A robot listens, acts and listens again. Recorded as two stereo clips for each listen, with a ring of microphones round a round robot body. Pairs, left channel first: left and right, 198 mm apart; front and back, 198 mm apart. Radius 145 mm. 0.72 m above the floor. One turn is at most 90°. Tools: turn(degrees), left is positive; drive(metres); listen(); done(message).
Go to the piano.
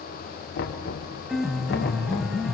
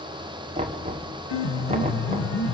drive(metres=1.0)
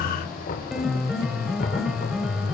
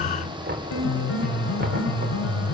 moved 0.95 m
drive(metres=1.0)
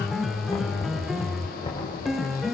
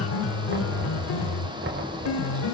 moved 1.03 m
drive(metres=1.0)
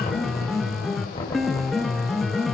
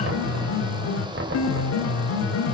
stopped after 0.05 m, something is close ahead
done("Arrived at the piano, straight ahead.")